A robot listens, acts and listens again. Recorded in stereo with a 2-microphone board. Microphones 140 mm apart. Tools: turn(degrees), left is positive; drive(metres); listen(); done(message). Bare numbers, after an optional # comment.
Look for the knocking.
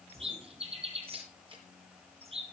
listen()
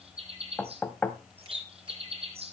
turn(30)
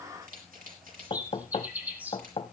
# So it is at 135° left.
turn(135)
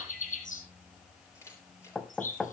done("Facing the knocking, 1 to 2 m away.")